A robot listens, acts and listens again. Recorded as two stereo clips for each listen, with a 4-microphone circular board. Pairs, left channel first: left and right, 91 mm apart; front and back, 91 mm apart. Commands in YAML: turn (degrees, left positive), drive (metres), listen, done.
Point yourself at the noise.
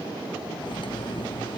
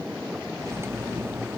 turn: 120
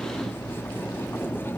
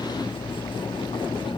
turn: 25
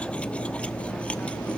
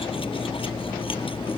turn: 15
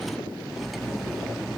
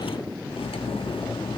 done: "Found it: cutlery clinking, straight ahead, 1 to 2 m away."